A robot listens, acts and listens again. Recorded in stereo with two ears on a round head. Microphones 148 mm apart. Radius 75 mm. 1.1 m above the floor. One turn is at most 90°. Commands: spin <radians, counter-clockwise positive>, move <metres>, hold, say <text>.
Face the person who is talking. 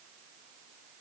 hold
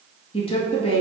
spin 0.61
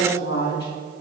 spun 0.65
spin 1.57
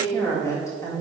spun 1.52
spin 0.35
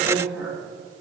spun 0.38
say Found it: a woman speaking, straight ahead.